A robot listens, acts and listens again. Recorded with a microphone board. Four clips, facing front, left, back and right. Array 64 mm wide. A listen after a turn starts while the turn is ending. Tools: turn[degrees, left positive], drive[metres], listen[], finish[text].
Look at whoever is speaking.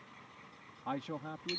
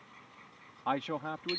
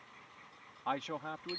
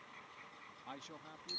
Thought: The man speaking: 115° left.
Action: turn[115]
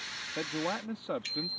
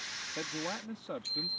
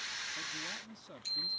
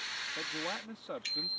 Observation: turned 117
Action: finish[Found it: a man speaking, straight ahead.]